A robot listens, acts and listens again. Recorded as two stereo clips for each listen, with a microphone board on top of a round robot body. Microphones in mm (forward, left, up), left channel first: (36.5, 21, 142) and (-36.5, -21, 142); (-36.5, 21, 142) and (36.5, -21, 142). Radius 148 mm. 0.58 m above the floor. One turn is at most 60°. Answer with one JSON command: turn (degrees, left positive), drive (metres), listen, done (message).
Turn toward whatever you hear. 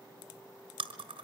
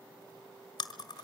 {"turn": -60}
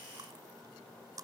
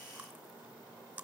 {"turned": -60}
{"turn": -60}
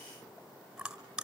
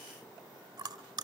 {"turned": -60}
{"turn": -60}
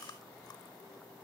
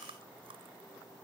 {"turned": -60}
{"turn": -10}
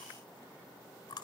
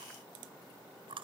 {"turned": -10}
{"done": "Found it: chewing, straight ahead, 1 to 2 m away."}